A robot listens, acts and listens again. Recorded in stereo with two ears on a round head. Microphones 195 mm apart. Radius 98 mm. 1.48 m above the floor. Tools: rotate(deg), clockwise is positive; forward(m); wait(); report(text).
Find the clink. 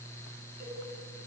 wait()
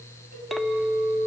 rotate(-30)
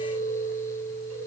rotate(-150)
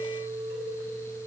rotate(15)
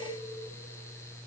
wait()
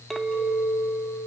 report("Found it: a clink, straight ahead, 1 to 2 m away.")